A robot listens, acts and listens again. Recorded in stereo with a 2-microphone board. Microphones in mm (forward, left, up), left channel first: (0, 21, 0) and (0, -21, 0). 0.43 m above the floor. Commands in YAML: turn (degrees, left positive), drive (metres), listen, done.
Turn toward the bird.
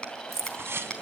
turn: -90
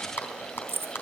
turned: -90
listen: true
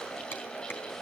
listen: true
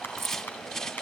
turn: 15
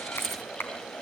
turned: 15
listen: true
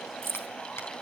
listen: true
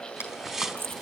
done: "Facing the bird."